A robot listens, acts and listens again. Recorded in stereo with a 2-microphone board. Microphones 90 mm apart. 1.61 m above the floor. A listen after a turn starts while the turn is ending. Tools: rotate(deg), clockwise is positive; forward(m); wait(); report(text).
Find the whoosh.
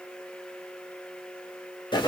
wait()
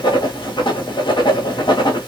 wait()
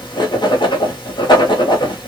report("I can't make out a whoosh, only writing.")